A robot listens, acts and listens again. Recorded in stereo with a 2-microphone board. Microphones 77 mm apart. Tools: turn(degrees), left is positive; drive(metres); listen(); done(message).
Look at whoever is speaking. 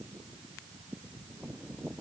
listen()
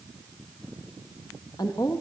turn(degrees=60)
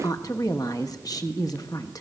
turn(degrees=55)
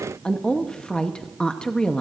turn(degrees=10)
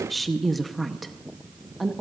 done("Found it: a woman speaking, straight ahead.")